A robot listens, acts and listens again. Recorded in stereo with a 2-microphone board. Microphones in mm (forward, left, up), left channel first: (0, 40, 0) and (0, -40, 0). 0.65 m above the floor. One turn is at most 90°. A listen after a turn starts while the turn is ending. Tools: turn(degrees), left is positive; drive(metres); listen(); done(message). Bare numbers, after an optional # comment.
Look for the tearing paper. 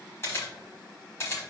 listen()
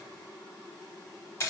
listen()
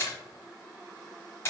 done("I can't make out tearing paper to turn to.")